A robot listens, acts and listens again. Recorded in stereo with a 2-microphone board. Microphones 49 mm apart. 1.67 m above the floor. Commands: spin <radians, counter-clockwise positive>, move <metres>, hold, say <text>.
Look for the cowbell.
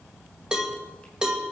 spin -0.26
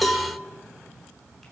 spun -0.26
say Found it: a cowbell, straight ahead, 2 to 4 m away.